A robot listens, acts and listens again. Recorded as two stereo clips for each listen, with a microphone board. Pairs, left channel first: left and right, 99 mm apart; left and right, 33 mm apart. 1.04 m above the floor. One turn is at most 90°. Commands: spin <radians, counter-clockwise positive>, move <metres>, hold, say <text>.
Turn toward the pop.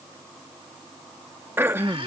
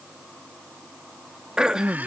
hold
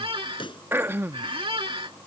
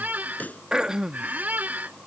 spin 1.05
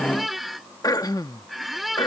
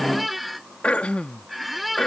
hold
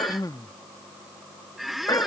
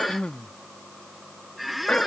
say I heard a pop, but can't make it out now. It was about straight ahead or 60° left.